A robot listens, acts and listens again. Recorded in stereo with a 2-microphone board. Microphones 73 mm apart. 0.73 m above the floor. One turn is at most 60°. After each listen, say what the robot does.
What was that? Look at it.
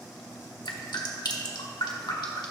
Turn 60° left.
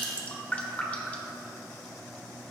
Turn 20° left.
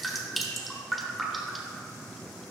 Found it: dripping, straight ahead, 1 to 2 m away.